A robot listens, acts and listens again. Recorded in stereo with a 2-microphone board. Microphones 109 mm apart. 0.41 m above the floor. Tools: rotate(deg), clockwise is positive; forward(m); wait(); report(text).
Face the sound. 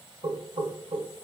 rotate(60)
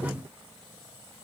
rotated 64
rotate(25)
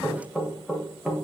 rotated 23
report("Found it: knocking, straight ahead, under 1 m away.")